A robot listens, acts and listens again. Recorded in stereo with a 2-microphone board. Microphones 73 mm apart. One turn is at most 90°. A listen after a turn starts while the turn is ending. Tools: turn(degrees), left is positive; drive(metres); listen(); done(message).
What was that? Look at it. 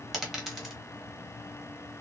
turn(degrees=30)
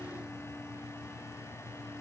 listen()
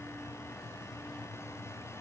done("I heard a dropped coin, but can't make it out now. It was about 30° right or 150° left.")